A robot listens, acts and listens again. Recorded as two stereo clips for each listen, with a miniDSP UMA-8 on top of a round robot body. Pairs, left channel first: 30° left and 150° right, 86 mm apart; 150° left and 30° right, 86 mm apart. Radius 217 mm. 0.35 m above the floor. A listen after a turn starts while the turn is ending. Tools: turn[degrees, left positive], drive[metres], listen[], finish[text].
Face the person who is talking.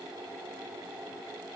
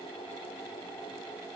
Action: listen[]
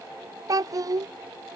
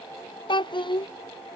Thought: The child speaking: 170° left.
Action: turn[170]
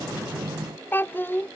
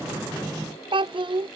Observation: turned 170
Thought: The child speaking is now 35° right.
Action: turn[-35]
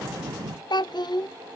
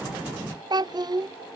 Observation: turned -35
Action: finish[Facing the child speaking.]